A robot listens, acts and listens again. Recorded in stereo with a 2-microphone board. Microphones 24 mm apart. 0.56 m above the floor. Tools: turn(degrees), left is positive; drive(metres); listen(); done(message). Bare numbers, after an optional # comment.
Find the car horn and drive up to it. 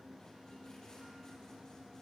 listen()
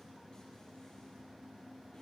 listen()
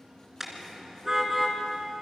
# The car horn: about 20° right or 160° right.
turn(-20)
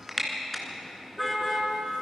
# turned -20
drive(1.0)
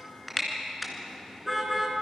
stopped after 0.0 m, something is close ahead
done("Something is in my way. I am facing the car horn but have not reached it.")